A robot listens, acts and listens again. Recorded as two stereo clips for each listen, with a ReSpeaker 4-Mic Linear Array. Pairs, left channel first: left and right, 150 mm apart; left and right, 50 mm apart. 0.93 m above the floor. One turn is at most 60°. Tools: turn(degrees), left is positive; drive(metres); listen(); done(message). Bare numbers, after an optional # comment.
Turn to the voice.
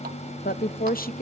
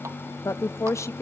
turn(60)
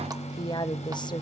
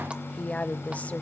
# So it is at 30° left.
turn(30)
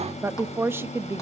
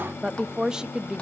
# The woman speaking is now 15° right.
turn(-15)
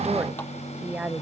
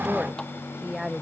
# The woman speaking is now 10° right.
turn(-10)
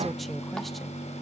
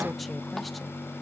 listen()
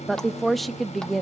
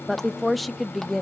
done("Facing the woman speaking.")